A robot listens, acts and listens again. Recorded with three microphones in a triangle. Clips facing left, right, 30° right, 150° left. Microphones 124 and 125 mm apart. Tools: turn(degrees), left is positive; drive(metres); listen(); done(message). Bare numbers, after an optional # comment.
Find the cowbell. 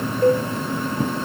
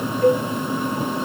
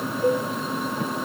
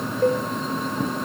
# The cowbell: 145° left.
turn(145)
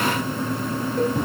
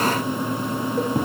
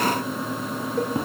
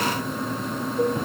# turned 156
# Nothing new. It was at 15° right.
turn(-15)
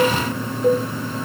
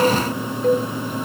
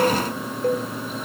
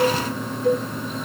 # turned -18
done("Facing the cowbell.")